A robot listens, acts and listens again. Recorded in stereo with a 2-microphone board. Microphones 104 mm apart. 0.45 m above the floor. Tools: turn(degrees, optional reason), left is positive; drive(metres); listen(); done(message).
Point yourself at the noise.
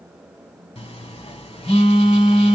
turn(degrees=90)
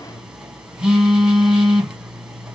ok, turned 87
turn(degrees=-10, reason="So it is at 10° right.")
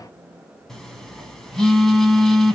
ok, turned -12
done("Facing the phone buzzing, 1 to 2 m away.")